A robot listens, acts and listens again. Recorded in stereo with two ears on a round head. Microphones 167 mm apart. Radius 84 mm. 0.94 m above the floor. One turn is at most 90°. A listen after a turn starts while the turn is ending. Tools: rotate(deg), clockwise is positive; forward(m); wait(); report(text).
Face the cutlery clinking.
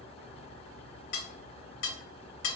rotate(-65)
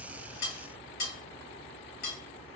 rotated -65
rotate(-50)
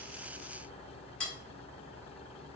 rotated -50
report("Found it: cutlery clinking, straight ahead.")